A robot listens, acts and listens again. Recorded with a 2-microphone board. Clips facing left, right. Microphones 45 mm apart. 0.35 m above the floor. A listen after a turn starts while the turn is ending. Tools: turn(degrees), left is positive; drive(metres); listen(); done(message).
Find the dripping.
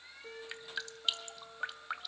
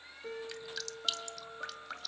turn(degrees=20)
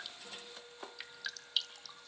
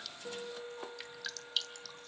done("Found it: dripping, straight ahead.")